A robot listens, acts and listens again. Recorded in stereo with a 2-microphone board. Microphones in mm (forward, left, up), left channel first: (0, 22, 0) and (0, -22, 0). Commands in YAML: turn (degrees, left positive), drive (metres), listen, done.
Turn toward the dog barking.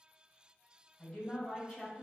listen: true
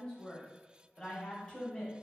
listen: true
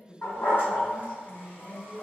turn: 50
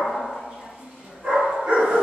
turn: -25
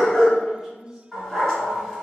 turn: 10
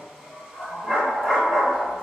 done: "Facing the dog barking."